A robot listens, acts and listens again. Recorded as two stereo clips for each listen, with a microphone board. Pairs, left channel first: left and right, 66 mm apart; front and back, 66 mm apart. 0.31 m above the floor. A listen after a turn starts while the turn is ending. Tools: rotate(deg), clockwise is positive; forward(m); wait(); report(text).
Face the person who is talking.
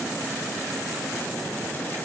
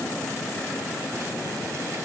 wait()
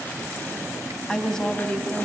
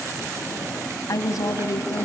rotate(-10)
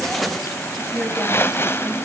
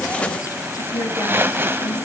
report("Found it: a woman speaking, straight ahead, 1 to 2 m away.")